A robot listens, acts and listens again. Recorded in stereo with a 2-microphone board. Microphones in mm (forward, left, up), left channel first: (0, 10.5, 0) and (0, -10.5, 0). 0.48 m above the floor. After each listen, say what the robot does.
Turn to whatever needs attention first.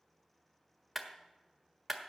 Keep listening.
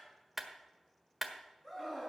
Turn 20° left.
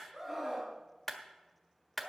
Facing the scream, over 4 m away.